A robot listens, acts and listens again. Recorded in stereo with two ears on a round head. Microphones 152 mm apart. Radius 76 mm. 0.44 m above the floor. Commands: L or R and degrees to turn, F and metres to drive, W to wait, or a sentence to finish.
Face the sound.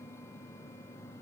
W
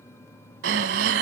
R90
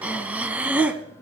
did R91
R10
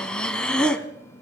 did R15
Facing the breathing, 1 to 2 m away.